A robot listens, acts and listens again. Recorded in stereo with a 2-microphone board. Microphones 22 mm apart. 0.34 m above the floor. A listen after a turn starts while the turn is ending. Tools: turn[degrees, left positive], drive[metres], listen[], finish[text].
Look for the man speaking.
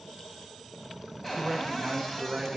Thought: The man speaking: about 25° right or 155° right.
Action: turn[-25]
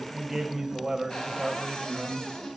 Thought: The man speaking: about 20° right or 160° right.
Action: turn[-20]
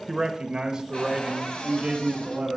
Thought: The man speaking: about 45° right or 135° right.
Action: turn[-45]
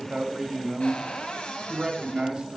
Thought: The man speaking: about 45° right or 135° right.
Action: turn[-45]
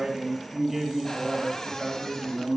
Thought: So it is at 15° right.
Action: turn[-15]
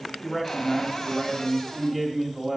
Action: finish[Found it: a man speaking, straight ahead, 1 to 2 m away.]